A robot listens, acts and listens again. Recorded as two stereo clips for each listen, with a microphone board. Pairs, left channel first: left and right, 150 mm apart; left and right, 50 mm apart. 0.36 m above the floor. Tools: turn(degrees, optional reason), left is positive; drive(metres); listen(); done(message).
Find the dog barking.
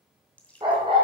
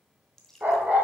turn(degrees=-30, reason="The dog barking: about 30° right or 150° right.")
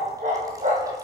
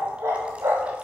turn(degrees=-125, reason="So it is at 125° right.")
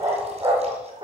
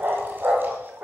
turn(degrees=-30, reason="The dog barking is now 30° right.")
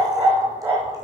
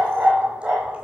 turn(degrees=-15, reason="The dog barking is now 15° right.")
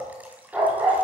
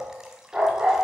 done("Found it: a dog barking, straight ahead.")